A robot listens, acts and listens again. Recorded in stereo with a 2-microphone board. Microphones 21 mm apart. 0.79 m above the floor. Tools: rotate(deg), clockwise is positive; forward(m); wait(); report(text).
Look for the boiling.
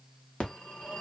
wait()
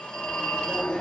wait()
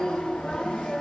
report("I can't make out boiling to turn to.")